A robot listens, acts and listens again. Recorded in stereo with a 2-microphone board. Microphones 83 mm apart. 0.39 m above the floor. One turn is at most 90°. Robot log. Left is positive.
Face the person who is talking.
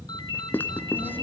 note: The child speaking: about 55° right or 125° right.
cmd yaw -55
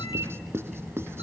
end: Found it: a child speaking, straight ahead.